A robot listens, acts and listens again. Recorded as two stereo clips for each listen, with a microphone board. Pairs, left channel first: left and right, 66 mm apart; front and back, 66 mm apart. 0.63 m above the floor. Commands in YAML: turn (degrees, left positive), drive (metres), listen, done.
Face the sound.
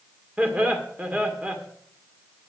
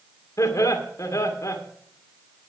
turn: -25
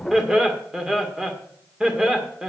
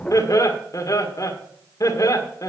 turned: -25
turn: -10
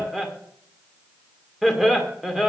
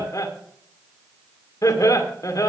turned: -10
done: "Found it: laughter, straight ahead, 2 to 4 m away."